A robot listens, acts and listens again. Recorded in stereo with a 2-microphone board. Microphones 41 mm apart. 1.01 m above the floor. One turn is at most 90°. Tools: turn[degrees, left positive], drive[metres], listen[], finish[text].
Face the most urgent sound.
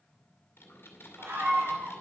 Thought: The scream: about 75° right or 105° right.
Action: turn[-75]
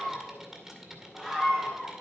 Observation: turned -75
Action: finish[Found it: a scream, straight ahead, 2 to 4 m away.]